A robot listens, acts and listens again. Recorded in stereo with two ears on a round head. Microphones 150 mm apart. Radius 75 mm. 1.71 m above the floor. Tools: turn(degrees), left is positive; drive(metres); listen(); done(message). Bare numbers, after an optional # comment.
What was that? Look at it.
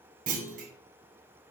# The clunk: about 50° right or 130° right.
turn(-50)
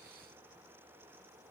listen()
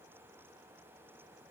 done("I heard a clunk, but can't make it out now. It was about straight ahead or 80° right.")